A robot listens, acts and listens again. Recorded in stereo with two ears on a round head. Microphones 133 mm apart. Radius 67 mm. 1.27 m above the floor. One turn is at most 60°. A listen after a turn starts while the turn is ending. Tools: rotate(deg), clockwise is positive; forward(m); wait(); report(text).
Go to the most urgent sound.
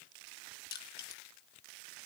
wait()
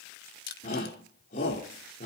rotate(-55)
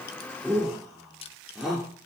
forward(1.0)
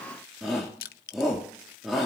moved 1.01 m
forward(1.0)
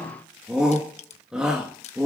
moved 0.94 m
forward(1.0)
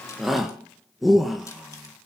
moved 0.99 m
forward(1.0)
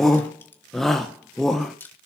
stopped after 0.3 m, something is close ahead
report("I am next to the shout.")